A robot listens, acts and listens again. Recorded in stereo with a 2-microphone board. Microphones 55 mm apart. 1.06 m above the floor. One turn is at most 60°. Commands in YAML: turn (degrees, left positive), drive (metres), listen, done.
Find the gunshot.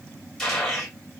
turn: 30
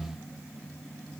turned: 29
listen: true
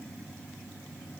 done: "I heard a gunshot, but can't make it out now. It was about 20° right or 140° left."